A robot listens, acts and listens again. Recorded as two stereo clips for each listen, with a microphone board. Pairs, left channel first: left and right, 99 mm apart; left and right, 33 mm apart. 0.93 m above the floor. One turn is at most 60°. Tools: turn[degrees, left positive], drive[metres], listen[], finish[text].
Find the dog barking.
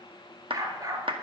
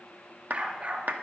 Thought: The dog barking: about 40° right or 140° right.
Action: turn[-40]
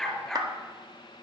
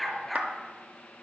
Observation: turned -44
Action: finish[Facing the dog barking.]